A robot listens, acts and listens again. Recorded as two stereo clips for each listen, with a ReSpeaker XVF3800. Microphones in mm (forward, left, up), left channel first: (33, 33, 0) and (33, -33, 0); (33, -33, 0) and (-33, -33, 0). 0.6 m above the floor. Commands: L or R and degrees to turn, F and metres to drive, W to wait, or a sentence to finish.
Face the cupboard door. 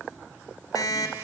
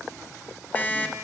W
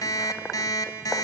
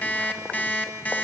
W
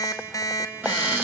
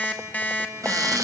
R150
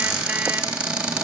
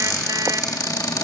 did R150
R20
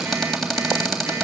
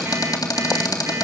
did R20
Found it: a cupboard door, straight ahead, 2 to 4 m away.